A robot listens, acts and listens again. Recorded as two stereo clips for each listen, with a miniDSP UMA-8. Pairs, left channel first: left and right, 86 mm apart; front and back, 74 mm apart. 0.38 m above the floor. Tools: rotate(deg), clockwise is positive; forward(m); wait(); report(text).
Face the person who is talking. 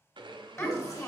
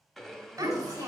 rotate(-140)
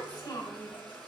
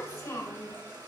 rotate(-35)
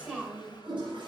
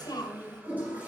rotate(15)
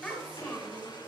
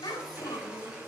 report("Facing the child speaking.")